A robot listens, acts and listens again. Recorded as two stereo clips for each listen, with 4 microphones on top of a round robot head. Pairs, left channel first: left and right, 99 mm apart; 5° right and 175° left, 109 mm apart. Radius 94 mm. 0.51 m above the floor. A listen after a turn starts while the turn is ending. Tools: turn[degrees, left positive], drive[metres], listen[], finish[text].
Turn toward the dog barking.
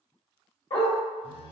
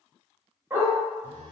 Thought: The dog barking: 105° left.
Action: turn[105]
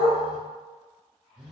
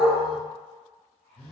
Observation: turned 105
Action: listen[]
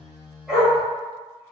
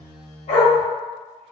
Action: finish[Found it: a dog barking, straight ahead, 1 to 2 m away.]